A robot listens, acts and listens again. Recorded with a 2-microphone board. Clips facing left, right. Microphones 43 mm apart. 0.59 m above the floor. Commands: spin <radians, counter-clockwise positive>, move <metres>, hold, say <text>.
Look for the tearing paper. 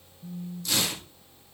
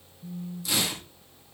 spin -0.26
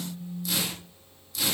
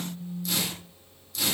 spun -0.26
say Facing the tearing paper, over 4 m away.